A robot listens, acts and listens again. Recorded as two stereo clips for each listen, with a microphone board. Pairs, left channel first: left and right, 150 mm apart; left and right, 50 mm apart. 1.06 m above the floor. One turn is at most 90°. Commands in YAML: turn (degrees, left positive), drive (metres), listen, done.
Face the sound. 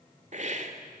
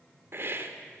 turn: -55
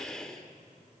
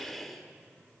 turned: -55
done: "Found it: a hiss, straight ahead."